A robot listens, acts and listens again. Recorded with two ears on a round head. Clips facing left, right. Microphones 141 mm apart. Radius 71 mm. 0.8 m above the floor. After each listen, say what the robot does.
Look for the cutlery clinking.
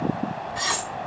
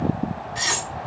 Turn 25° right.
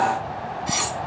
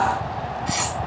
Facing the cutlery clinking, 1 to 2 m away.